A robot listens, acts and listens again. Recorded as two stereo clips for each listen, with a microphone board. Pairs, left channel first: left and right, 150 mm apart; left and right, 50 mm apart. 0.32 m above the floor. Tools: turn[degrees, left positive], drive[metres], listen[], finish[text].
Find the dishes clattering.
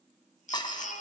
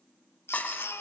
Thought: The dishes clattering: about 30° left or 150° left.
Action: turn[30]
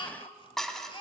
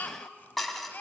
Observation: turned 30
Action: finish[Facing the dishes clattering.]